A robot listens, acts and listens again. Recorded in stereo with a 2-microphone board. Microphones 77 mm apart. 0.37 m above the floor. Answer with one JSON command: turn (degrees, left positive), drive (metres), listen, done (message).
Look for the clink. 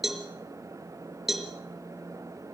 {"listen": true}
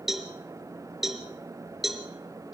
{"listen": true}
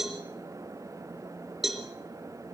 {"done": "I can't make out a clink, only a cowbell."}